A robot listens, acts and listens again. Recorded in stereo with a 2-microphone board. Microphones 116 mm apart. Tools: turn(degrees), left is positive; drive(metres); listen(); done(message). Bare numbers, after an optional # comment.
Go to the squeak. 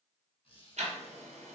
# The squeak: about 50° left or 130° left.
turn(50)
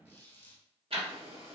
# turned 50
# So it is at 75° left.
turn(75)
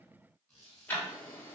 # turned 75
drive(1.0)
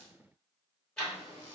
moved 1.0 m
listen()
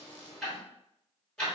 listen()
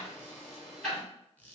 # The squeak is now 15° left.
turn(15)
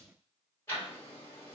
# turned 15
listen()
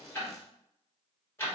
listen()
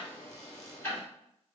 done("Facing where the squeak came from. I can't hear it now. I did not reach it.")